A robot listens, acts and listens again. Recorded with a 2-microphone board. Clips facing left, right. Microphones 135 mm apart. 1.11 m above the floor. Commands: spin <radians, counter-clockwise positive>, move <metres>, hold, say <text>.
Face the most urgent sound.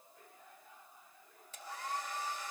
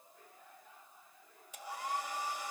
hold
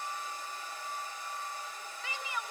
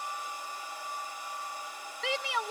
spin -1.57
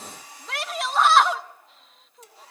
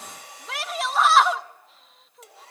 say Found it: a shout, straight ahead, 1 to 2 m away.